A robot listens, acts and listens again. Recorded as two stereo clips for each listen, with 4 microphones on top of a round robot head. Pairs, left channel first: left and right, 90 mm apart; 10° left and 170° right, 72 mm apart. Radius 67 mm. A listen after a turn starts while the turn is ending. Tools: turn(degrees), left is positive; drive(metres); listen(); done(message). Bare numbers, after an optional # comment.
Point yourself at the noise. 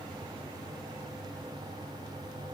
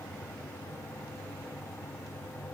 listen()
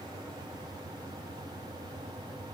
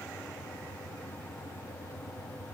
listen()
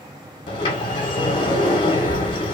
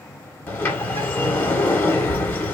# The sliding door: 65° left.
turn(65)
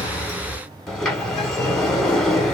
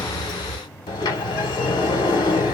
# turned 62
done("Found it: a sliding door, straight ahead.")